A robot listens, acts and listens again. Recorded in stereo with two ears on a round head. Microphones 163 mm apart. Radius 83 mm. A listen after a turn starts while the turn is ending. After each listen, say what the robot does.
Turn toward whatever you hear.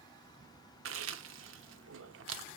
Turn 90° right.
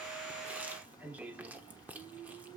Turn 10° right.
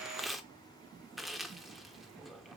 Found it: chewing, straight ahead.